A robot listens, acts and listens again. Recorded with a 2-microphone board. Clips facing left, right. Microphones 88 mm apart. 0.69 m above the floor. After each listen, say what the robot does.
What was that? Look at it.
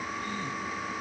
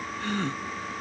Turn 70° right.
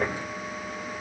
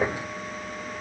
Keep listening.
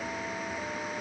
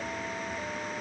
I heard a gasp, but can't make it out now. It was about straight ahead or 40° right.